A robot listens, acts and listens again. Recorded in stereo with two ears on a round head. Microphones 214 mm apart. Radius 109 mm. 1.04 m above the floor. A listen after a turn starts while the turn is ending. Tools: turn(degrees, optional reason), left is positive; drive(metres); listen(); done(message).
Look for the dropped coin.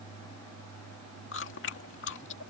listen()
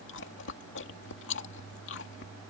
listen()
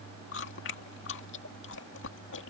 done("I can't make out a dropped coin to turn to.")